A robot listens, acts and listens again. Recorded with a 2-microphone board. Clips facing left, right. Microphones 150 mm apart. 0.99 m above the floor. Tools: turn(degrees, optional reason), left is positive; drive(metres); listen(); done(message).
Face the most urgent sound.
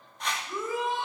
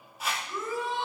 turn(degrees=20, reason="The shout: about 20° left or 160° left.")
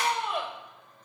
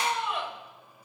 turn(degrees=140, reason="So it is at 140° left.")
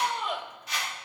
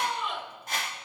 turn(degrees=40, reason="The shout is now 40° left.")
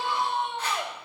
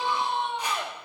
done("Found it: a shout, straight ahead, over 4 m away.")